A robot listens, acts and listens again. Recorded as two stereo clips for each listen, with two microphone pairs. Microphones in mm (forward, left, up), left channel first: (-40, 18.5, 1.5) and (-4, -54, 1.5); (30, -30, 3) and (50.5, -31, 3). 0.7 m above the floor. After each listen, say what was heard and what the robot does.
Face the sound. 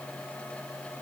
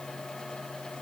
Keep listening.
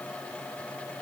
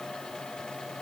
Keep listening.
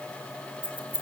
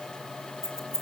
The keys jangling: 135° right. Turn 135° right.
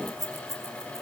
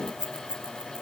The keys jangling is now 30° left. Turn 30° left.
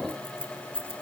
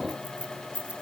Found it: keys jangling, straight ahead, over 4 m away.